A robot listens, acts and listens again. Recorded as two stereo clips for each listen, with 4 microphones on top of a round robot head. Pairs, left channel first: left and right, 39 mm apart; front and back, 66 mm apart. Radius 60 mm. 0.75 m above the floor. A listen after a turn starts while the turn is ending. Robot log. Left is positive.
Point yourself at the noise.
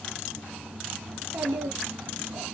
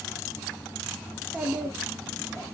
note: The child speaking: 105° right.
cmd yaw -105
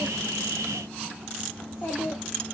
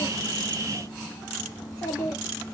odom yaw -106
note: The child speaking is now 50° left.
cmd yaw +50
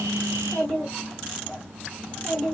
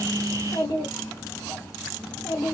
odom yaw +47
note: The child speaking is now 25° left.
cmd yaw +25
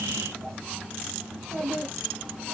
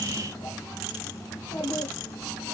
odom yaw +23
end: Found it: a child speaking, straight ahead.